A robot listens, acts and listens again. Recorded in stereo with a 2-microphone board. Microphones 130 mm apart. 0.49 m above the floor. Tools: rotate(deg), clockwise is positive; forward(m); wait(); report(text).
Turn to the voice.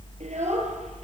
rotate(60)
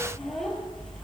report("Found it: a child speaking, straight ahead, over 4 m away.")